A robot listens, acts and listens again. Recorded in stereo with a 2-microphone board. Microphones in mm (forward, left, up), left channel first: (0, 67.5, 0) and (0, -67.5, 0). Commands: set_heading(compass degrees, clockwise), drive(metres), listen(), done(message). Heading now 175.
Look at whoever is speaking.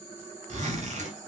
listen()
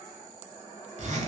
listen()
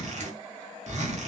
done("I can't make out anyone speaking to turn to.")